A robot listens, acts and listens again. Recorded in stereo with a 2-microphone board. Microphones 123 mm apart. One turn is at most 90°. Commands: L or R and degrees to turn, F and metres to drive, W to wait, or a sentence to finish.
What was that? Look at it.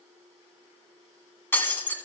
L15
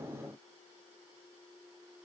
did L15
W
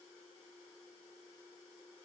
I heard breaking glass, but can't make it out now. It was about straight ahead or 150° left.